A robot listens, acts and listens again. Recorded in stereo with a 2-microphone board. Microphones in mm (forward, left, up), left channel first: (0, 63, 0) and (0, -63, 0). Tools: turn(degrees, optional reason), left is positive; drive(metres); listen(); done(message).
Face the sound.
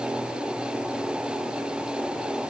listen()
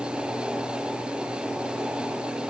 listen()
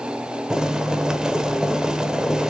turn(degrees=-30)
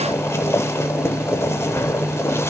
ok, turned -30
turn(degrees=20, reason="So it is at 20° left.")
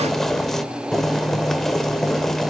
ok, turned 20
done("Found it: boiling, straight ahead, 1 to 2 m away.")